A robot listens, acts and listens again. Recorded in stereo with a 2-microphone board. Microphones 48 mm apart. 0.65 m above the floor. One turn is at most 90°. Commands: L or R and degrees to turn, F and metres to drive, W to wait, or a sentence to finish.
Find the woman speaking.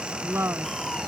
R60
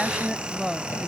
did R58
Found it: a woman speaking, straight ahead.